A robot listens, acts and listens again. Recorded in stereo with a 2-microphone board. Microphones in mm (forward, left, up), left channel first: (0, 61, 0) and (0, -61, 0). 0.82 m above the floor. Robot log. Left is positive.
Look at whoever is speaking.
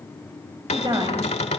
note: The woman speaking: about 40° right or 140° right.
cmd yaw -40
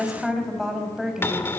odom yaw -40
end: Found it: a woman speaking, straight ahead, over 4 m away.